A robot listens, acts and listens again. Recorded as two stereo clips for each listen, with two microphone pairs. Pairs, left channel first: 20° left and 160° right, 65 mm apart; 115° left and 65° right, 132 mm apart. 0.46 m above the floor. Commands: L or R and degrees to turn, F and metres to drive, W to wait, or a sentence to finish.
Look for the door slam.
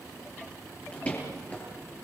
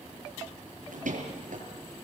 R50
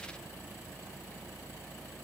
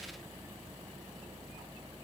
Facing where the door slam came from. I can't hear it now.